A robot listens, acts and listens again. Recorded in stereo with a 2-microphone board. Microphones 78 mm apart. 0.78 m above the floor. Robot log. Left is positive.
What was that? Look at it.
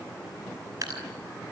note: The dripping: about 50° right or 130° right.
cmd yaw -50
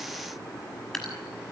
end: Facing the dripping.